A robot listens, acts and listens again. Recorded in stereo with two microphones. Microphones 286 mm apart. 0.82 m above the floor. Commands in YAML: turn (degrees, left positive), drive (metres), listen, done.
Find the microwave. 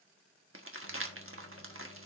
turn: 50
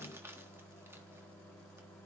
done: "Found it: a microwave, straight ahead, 1 to 2 m away."